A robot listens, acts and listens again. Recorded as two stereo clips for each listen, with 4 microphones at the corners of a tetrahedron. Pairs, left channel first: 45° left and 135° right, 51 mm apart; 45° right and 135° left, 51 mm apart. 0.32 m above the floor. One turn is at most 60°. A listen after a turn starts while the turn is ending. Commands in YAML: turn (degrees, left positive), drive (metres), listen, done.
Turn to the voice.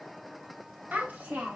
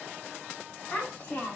turn: -60
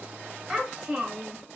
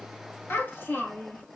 turn: -60
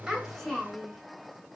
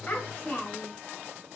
turn: -40
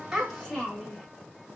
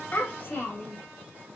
turn: -35
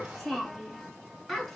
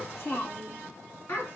turn: -35
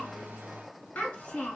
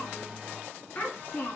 done: "Facing the child speaking."